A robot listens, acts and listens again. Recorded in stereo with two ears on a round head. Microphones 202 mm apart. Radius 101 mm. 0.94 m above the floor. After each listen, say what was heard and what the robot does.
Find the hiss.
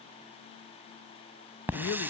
Turn 30° right.
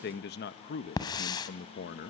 So it is at 20° left. Turn 20° left.
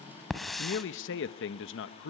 Facing the hiss.